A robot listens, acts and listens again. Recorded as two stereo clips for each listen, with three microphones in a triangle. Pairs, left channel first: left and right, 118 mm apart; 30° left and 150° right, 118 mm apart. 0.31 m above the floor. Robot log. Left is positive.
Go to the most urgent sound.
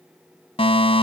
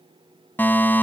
note: The fire alarm: 100° left.
cmd yaw +100
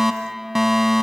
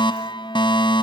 cmd fwd 1.0
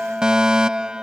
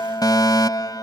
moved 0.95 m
note: The fire alarm is now 10° right.
cmd yaw -10
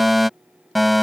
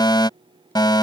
cmd fwd 1.0
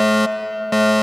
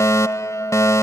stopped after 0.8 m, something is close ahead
end: I am next to the fire alarm.